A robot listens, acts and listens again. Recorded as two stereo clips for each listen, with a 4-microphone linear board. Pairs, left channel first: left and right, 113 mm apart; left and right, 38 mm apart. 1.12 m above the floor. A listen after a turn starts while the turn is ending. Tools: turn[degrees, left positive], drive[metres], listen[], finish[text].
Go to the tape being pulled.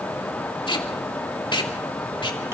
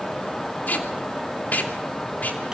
Thought: The tape being pulled: about 45° left or 135° left.
Action: turn[45]
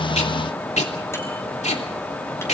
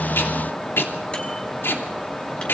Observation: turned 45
Thought: So it is at 90° left.
Action: turn[90]
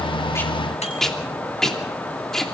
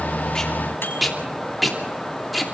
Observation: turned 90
Action: drive[1.0]
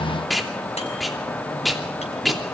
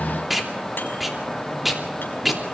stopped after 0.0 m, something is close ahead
Action: finish[Blocked. The tape being pulled is further on, straight ahead.]